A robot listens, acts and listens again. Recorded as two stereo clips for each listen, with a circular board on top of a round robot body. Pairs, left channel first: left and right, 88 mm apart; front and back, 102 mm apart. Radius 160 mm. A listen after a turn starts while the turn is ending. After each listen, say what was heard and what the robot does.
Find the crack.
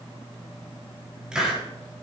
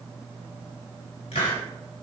Keep listening.
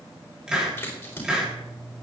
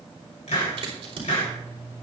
The crack: 155° left. Turn 155° left.
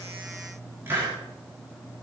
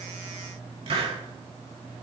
I heard a crack from this way, but can't make it out now.